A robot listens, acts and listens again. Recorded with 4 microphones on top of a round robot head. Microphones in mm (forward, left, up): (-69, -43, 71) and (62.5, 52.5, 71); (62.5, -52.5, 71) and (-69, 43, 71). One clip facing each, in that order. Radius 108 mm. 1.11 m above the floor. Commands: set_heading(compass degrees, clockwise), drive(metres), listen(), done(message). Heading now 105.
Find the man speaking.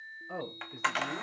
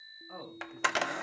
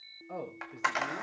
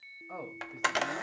set_heading(205)
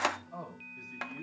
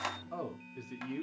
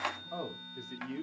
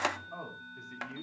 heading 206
set_heading(186)
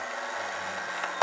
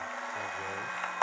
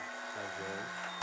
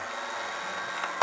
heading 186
listen()
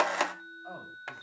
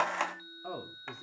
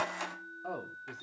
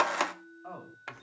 set_heading(171)
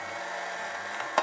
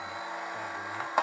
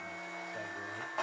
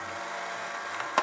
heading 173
listen()
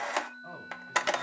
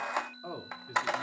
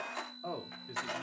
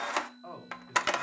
set_heading(158)
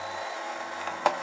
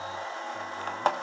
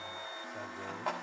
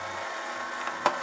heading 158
listen()
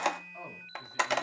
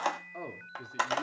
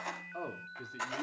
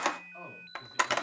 done("Found it: a man speaking, straight ahead, 2 to 4 m away.")